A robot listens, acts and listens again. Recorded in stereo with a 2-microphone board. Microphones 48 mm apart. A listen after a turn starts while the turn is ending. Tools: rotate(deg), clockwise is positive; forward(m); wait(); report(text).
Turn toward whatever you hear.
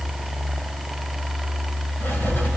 rotate(-45)
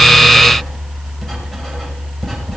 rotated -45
report("Found it: writing, straight ahead.")